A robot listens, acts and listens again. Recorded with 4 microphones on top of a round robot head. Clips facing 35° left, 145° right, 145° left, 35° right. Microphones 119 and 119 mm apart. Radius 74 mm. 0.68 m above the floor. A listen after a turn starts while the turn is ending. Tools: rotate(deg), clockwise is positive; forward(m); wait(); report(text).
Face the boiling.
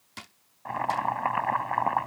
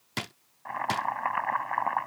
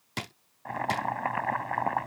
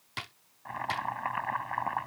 rotate(-100)
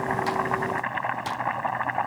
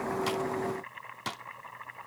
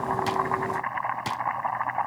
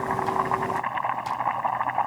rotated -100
rotate(-35)
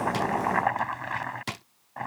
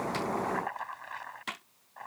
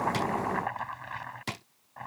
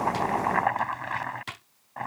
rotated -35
report("Facing the boiling.")